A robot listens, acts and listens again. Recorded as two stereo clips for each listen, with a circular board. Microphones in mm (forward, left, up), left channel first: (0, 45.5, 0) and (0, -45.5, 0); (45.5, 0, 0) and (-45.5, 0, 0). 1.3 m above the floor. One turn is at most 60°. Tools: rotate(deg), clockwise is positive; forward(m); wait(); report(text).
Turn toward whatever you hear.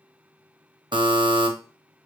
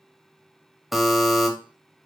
rotate(60)
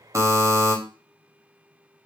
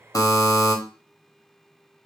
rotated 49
rotate(40)
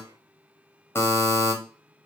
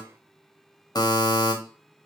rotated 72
rotate(-30)
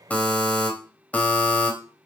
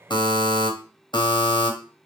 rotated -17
rotate(-15)
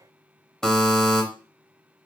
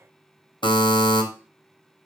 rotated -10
report("Found it: a buzzer, straight ahead, 1 to 2 m away.")